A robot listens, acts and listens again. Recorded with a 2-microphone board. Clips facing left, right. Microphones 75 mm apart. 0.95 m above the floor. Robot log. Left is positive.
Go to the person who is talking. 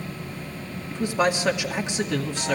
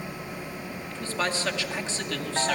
note: The man speaking: about 15° left or 165° left.
cmd yaw +15
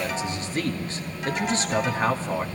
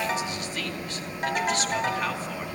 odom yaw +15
note: So it is at 150° left.
cmd yaw +150
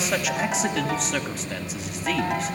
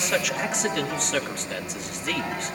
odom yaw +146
cmd fwd 1.0
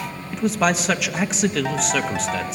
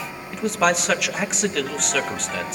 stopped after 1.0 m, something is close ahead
end: I am next to the man speaking.